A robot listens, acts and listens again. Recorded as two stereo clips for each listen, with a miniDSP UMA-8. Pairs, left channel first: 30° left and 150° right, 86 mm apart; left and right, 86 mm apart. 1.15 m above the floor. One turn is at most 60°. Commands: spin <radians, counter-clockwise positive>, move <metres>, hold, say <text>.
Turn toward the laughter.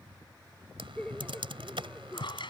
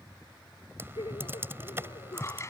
spin 1.05
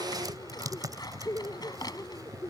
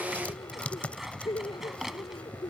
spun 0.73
spin 1.05
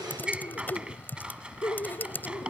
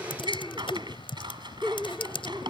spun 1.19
spin 0.17
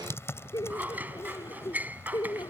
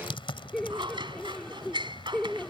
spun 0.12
say Found it: laughter, straight ahead.